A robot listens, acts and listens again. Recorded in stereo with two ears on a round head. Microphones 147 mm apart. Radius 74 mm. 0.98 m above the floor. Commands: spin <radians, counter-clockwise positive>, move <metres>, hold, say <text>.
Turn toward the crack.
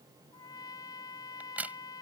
spin -0.52
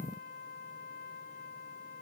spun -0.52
hold
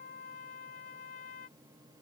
say I heard a crack, but can't make it out now. It was about 20° left or 140° right.